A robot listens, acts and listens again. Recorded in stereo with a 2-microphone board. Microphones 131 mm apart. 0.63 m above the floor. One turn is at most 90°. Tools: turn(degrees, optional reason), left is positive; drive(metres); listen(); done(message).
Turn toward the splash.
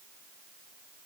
listen()
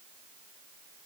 listen()
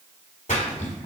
turn(degrees=75, reason="The splash: about 75° left or 105° left.")
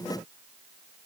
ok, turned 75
listen()
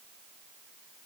done("I heard a splash, but can't make it out now. It was about straight ahead or 30° left.")